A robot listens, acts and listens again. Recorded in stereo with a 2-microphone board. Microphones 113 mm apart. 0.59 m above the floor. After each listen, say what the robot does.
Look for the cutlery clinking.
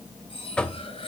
Turn 55° left.
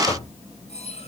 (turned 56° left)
Turn 70° left.
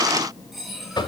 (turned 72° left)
Facing the cutlery clinking.